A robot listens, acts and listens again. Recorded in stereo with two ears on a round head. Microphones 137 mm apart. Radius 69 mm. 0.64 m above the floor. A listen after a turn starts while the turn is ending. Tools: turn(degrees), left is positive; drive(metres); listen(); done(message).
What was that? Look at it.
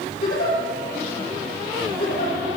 turn(degrees=90)
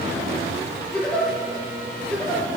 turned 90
turn(degrees=10)
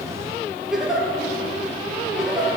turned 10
done("Found it: a giggle, straight ahead.")